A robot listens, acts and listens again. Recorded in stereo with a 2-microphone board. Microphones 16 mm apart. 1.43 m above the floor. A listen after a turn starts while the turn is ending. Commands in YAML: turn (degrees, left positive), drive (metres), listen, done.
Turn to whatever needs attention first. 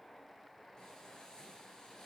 listen: true
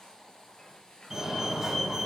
turn: -25
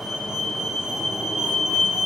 turn: -125
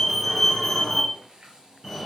done: "Facing the fire alarm."